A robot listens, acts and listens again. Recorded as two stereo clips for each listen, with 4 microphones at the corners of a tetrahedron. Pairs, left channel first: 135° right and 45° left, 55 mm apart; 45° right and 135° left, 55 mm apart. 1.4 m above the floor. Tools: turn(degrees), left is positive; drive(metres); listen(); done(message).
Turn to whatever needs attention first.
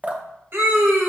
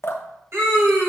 turn(degrees=95)
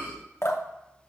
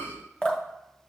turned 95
listen()
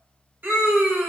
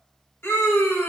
done("Found it: a scream, straight ahead.")